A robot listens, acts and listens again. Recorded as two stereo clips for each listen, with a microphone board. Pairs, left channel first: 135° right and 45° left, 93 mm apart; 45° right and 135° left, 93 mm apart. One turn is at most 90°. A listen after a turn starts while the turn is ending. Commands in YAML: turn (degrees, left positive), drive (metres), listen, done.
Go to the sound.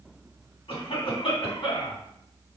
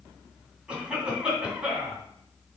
turn: -90
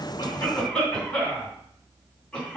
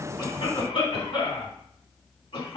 turn: -55
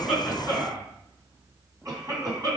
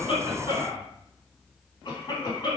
drive: 1.0
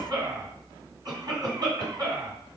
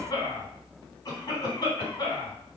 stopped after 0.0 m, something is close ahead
done: "Blocked. The cough is further on, straight ahead."